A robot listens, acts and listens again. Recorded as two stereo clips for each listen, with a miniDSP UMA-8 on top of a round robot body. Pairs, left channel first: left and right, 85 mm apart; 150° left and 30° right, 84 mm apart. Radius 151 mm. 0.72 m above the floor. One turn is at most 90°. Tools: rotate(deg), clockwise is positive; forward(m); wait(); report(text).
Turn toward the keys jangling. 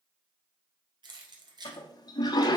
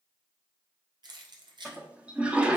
rotate(55)
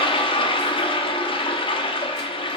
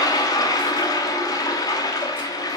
wait()
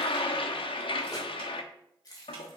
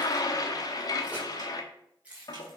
rotate(-45)
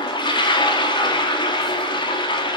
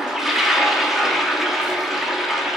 wait()
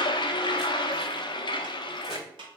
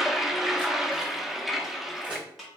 wait()
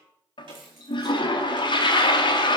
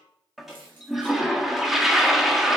report("Facing where the keys jangling came from. I can't hear it now.")